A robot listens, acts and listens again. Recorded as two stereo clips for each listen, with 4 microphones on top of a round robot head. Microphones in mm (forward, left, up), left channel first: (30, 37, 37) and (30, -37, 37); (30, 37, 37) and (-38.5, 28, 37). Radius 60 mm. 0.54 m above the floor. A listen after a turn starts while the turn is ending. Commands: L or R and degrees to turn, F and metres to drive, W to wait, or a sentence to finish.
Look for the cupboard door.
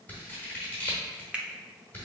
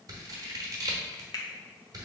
W
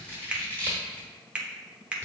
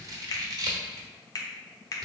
W
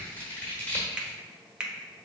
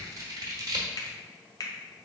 I can't make out a cupboard door, only a finger snap and scissors.